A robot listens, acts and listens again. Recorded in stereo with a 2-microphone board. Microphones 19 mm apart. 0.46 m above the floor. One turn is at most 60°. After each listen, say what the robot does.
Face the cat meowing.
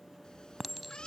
Turn 50° left.
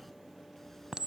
Keep listening.
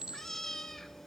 Turn 20° left.
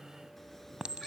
Keep listening.
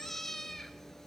Turn 20° left.
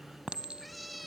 Facing the cat meowing, 2 to 4 m away.